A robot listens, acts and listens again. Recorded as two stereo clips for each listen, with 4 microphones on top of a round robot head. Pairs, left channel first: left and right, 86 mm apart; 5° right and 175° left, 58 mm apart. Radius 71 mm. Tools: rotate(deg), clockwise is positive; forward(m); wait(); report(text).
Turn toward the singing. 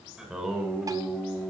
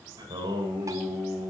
rotate(170)
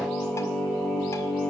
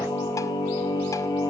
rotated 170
rotate(-15)
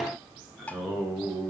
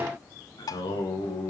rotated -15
report("Found it: singing, straight ahead, over 4 m away.")